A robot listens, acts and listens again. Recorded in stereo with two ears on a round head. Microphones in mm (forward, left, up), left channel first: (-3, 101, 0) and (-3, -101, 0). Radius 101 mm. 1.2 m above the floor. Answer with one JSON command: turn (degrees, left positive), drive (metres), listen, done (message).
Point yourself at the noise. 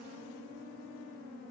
{"listen": true}
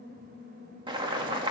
{"turn": -20}
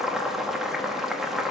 {"done": "Facing the boiling, 1 to 2 m away."}